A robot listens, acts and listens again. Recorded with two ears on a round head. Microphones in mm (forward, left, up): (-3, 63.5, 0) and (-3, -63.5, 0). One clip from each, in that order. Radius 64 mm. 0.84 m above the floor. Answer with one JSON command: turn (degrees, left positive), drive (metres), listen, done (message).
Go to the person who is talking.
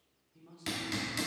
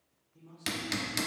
{"turn": 40}
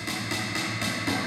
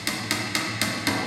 {"listen": true}
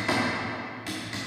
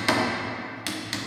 {"listen": true}
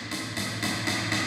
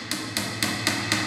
{"done": "I heard a man speaking, but can't make it out now. It was about straight ahead or 100° left. I did not reach it."}